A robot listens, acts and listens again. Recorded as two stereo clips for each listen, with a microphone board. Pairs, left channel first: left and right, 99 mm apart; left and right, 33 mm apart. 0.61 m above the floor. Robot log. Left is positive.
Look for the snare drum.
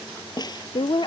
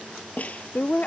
note: The snare drum: about 45° left or 135° left.
cmd yaw +45
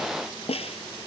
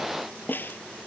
note: So it is at 85° left.
cmd yaw +85
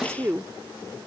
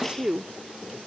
cmd idle
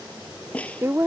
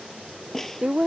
note: The snare drum is now 10° left.
cmd yaw +10
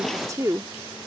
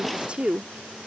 cmd idle
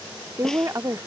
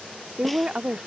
cmd idle
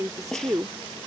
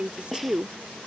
end: Found it: a snare drum, straight ahead.